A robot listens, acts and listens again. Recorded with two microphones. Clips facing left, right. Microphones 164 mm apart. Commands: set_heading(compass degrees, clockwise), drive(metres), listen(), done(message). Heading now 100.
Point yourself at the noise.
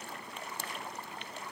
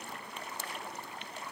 listen()
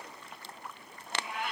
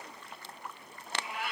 set_heading(130)
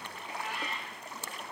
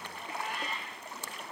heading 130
set_heading(260)
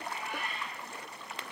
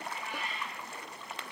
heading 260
set_heading(200)
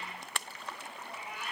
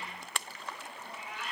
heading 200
set_heading(185)
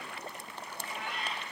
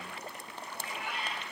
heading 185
done("Found it: a cat meowing, straight ahead, 2 to 4 m away.")